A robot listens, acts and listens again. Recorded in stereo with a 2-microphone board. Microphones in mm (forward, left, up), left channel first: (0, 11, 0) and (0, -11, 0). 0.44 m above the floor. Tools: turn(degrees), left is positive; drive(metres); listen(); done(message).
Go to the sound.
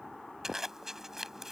turn(degrees=-15)
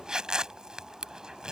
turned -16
turn(degrees=-150)
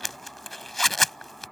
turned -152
drive(metres=1.0)
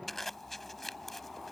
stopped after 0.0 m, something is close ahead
done("Something is in my way. I am facing the zipper but have not reached it.")